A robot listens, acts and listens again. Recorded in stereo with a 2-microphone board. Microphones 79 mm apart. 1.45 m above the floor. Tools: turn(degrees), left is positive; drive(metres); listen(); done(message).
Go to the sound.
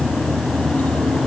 listen()
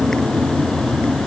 listen()
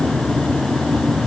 done("I can't make out anything.")